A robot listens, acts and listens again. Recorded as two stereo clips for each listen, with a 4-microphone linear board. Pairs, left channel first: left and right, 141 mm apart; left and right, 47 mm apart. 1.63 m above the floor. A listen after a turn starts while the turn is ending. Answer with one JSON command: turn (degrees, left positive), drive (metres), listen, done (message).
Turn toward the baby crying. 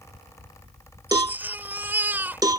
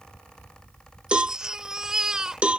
{"turn": -30}
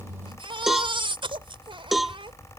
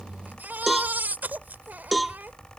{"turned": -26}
{"turn": -140}
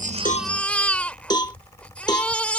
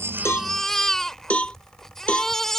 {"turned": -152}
{"turn": 10}
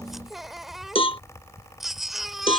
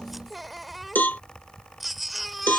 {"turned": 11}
{"done": "Found it: a baby crying, straight ahead."}